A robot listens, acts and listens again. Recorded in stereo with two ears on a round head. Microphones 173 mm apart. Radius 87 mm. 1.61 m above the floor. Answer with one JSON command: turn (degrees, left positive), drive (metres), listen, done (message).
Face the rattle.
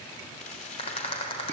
{"turn": 30}
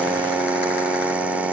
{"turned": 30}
{"listen": true}
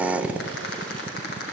{"turn": 115}
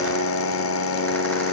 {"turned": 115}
{"listen": true}
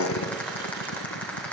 {"turn": 10}
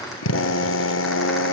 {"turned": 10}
{"listen": true}
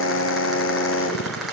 {"done": "Facing the rattle."}